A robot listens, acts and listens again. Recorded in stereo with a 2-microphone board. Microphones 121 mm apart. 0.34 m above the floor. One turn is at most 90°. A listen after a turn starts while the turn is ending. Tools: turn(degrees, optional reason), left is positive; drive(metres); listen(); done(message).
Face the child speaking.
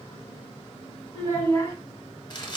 turn(degrees=25, reason="The child speaking: about 25° left or 155° left.")
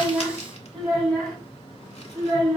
done("Facing the child speaking, 2 to 4 m away.")